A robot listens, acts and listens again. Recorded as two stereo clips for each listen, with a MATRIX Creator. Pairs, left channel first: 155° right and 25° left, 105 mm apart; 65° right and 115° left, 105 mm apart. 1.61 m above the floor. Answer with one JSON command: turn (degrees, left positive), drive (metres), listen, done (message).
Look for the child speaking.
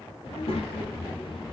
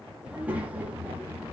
{"turn": 180}
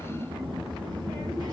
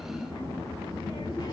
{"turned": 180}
{"turn": -20}
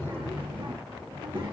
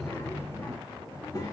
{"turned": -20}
{"turn": -10}
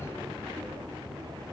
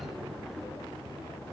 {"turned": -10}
{"turn": -10}
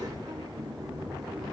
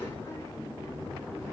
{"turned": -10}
{"done": "Found it: a child speaking, straight ahead, 2 to 4 m away."}